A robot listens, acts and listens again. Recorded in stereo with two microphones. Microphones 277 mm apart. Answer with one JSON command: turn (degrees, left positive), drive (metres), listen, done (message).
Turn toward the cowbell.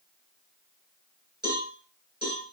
{"turn": 35}
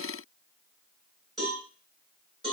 {"done": "Facing the cowbell."}